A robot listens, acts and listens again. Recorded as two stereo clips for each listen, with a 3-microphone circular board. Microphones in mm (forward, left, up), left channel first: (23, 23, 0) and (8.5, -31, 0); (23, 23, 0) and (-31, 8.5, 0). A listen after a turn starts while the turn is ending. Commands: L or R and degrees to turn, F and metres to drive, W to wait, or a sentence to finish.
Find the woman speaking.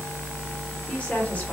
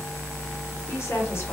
L15
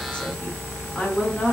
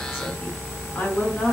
L30
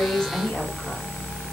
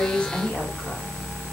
L30
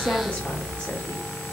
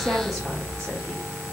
W
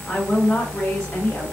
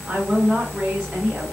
L120
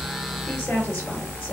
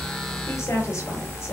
L20
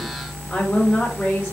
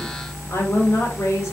L10
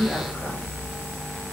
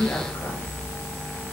W
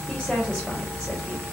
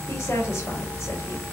Facing the woman speaking.